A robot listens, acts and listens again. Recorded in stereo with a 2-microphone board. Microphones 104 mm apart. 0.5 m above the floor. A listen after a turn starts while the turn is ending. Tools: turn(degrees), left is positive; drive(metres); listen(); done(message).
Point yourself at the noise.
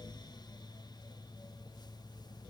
listen()
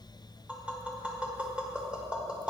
turn(degrees=-30)
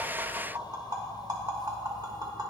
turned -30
turn(degrees=-135)
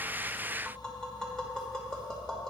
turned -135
done("Facing the tapping.")